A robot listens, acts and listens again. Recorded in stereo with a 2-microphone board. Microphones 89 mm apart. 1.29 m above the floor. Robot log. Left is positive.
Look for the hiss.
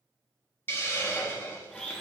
note: The hiss: about 25° left or 155° left.
cmd yaw +25
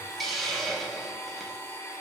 end: Found it: a hiss, straight ahead.